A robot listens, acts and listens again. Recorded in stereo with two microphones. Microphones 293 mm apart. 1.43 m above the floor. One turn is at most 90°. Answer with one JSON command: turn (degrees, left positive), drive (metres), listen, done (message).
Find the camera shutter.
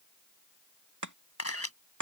{"turn": 55}
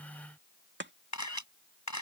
{"turn": 70}
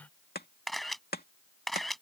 {"done": "Found it: a camera shutter, straight ahead."}